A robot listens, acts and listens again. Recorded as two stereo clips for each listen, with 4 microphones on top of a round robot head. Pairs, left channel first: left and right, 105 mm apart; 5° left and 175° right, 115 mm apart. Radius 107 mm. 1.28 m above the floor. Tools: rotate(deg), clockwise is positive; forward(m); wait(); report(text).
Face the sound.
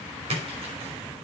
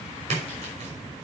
rotate(130)
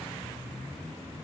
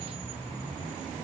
report("Facing where the splash came from. I can't hear it now.")